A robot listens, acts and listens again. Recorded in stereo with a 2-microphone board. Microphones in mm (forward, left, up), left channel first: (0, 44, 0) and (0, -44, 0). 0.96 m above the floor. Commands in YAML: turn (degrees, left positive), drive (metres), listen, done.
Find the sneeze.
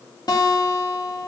listen: true
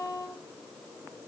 listen: true
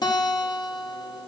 done: "I can't make out a sneeze to turn to."